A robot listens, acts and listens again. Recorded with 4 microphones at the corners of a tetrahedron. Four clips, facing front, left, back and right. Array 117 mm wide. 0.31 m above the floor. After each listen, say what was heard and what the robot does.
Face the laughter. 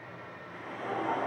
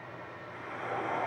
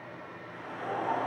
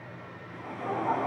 The laughter: 85° right. Turn 85° right.
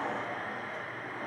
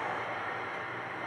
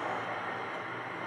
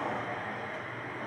Keep listening.
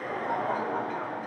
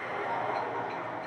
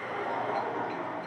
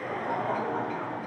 The laughter is now 35° right. Turn 35° right.
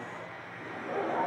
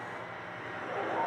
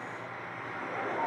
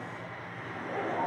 Facing the laughter, over 4 m away.